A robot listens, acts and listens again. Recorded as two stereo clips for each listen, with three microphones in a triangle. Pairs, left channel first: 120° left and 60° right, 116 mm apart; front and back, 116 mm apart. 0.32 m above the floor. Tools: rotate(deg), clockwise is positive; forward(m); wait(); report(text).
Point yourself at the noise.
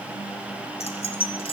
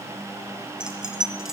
rotate(-95)
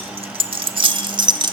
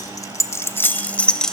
rotate(80)
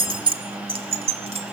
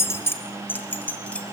rotate(75)
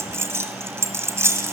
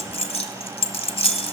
report("Facing the keys jangling.")